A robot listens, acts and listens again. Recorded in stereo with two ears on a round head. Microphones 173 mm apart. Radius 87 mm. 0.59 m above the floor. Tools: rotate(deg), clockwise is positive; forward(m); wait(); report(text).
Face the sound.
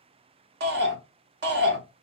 rotate(60)
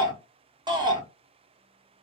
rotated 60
rotate(25)
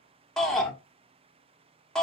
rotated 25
report("Found it: a shout, straight ahead.")